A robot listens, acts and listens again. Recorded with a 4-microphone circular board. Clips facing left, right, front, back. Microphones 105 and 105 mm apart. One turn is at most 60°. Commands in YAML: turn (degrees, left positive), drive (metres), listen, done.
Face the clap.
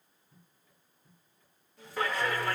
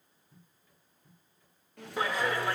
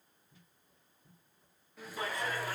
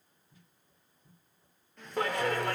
turn: -60
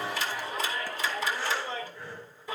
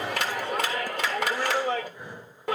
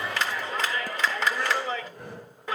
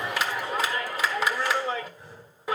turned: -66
turn: -60
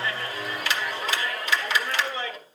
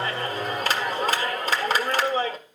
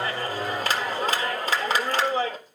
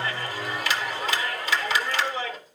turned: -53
turn: -45
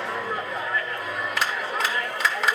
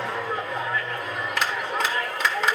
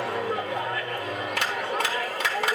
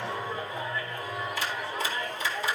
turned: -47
done: "Found it: a clap, straight ahead."